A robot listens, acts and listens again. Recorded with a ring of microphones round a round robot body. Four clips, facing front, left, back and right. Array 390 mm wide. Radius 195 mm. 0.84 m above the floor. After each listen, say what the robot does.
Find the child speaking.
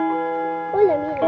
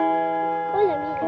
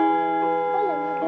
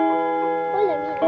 Turn 10° left.
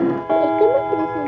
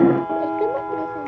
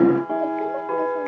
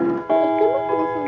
Turn 20° right.
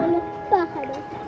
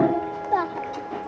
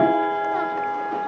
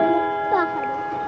Turn 25° right.
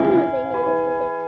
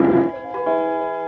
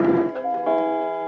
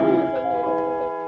Keep listening.
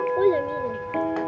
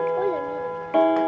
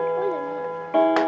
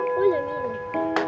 Turn 40° right.
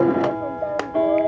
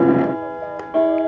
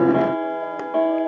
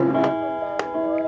Keep listening.
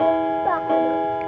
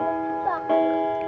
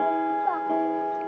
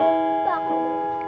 Turn 10° right.
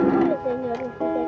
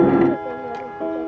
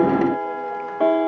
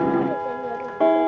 Keep listening.
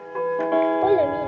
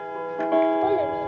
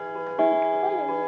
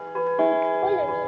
Keep listening.
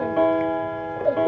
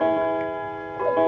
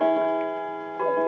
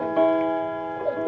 I heard a child speaking from this way, but can't make it out now.